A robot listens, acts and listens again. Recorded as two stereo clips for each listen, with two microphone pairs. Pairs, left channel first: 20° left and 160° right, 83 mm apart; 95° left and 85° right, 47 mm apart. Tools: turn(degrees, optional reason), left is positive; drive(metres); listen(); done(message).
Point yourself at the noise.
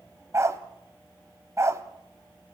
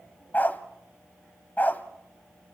turn(degrees=145, reason="The dog barking: 145° left.")
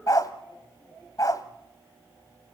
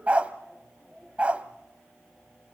turn(degrees=-20, reason="The dog barking is now 20° right.")
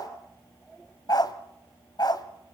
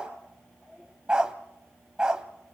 turn(degrees=-10, reason="The dog barking is now 10° right.")
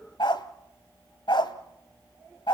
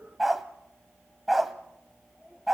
done("Found it: a dog barking, straight ahead, 1 to 2 m away.")